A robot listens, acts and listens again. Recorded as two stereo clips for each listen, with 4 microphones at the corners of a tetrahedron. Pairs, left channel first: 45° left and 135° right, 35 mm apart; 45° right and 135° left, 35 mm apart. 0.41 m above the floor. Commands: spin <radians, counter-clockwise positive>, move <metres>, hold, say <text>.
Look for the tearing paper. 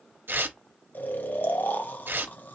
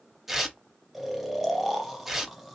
spin -2.53
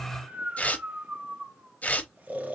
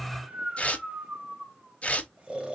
say Facing the tearing paper.